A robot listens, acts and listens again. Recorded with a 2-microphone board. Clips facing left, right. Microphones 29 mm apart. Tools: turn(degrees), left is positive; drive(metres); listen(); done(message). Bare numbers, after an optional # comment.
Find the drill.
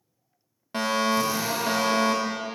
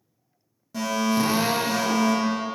# The drill: about 45° right or 135° right.
turn(-45)
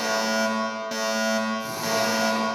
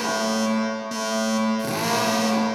# So it is at 85° right.
turn(-85)
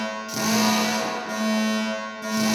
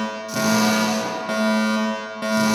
listen()
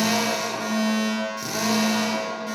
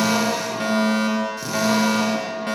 done("Facing the drill, under 1 m away.")